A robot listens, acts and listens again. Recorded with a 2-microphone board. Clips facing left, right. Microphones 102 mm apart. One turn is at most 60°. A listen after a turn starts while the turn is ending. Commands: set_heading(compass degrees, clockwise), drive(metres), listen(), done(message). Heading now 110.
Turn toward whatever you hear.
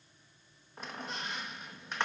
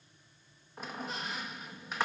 set_heading(140)
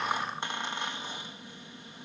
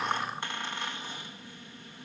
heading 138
set_heading(113)
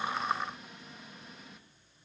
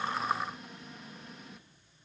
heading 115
done("Found it: a squeak, straight ahead.")